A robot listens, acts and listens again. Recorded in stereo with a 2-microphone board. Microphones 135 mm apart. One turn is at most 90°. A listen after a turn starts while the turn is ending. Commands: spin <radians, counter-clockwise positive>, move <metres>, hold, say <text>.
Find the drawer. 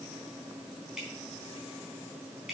hold
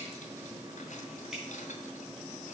hold
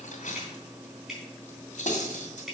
say I can't make out a drawer, only cutlery clinking and dripping.